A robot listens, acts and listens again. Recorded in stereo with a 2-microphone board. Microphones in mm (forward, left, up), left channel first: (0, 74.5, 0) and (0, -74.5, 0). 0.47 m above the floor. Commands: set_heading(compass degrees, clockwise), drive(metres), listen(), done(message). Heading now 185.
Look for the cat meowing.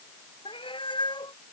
set_heading(155)
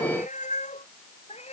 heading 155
set_heading(20)
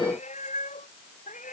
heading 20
set_heading(320)
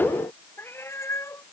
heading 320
set_heading(300)
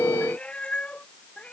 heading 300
set_heading(290)
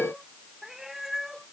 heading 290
done("Found it: a cat meowing, straight ahead.")